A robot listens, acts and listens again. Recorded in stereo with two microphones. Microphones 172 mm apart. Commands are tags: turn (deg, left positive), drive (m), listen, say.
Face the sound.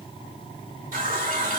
<turn deg="-50"/>
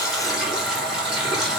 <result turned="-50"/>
<say>Found it: a running tap, straight ahead, 2 to 4 m away.</say>